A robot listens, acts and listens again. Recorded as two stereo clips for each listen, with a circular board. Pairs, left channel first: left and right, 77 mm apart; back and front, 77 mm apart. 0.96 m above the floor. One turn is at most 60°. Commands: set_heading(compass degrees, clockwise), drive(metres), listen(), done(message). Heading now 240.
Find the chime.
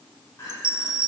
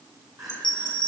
set_heading(300)
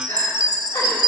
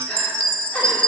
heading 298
set_heading(358)
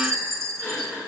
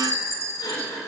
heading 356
set_heading(46)
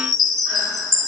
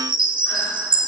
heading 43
done("Found it: a chime, straight ahead.")